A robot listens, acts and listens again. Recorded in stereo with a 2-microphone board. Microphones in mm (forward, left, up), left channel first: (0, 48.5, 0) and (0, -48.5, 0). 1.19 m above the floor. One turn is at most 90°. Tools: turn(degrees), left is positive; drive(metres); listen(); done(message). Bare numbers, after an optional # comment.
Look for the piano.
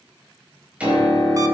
turn(-30)
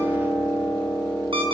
# So it is at 15° left.
turn(15)
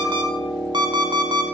done("Found it: a piano, straight ahead.")